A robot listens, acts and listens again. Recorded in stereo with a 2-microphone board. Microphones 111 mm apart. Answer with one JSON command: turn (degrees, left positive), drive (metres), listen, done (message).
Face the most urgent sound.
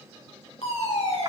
{"turn": 90}
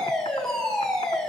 {"done": "Facing the fire alarm."}